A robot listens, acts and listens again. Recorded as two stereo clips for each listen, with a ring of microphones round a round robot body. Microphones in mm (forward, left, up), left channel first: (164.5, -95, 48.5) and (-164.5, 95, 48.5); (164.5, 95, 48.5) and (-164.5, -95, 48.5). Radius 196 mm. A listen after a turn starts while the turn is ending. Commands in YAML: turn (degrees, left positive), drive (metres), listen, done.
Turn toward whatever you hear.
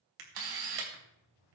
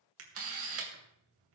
turn: 160
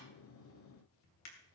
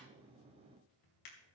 turn: 10
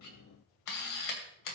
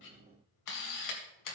done: "Found it: a camera shutter, straight ahead, 2 to 4 m away."